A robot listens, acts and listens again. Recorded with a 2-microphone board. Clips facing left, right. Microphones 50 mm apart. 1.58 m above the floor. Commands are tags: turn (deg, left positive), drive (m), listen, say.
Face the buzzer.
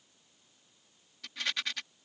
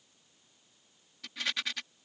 <listen/>
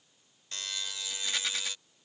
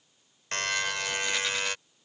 <turn deg="-70"/>
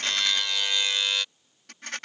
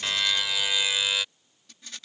<say>Found it: a buzzer, straight ahead.</say>